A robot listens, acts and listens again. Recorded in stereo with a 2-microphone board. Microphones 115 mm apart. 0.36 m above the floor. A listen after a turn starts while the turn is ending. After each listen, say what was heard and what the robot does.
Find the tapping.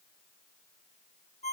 Keep listening.
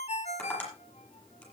Turn 30° left.
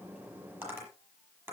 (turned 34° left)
So it is at 25° right. Turn 25° right.
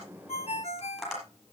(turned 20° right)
Found it: tapping, straight ahead, over 4 m away.